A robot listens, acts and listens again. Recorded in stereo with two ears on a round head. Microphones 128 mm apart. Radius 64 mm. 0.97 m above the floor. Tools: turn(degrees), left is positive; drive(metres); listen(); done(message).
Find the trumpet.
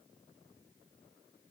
listen()
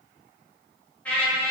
turn(degrees=30)
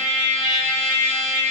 turn(degrees=-20)
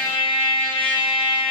done("Facing the trumpet, 2 to 4 m away.")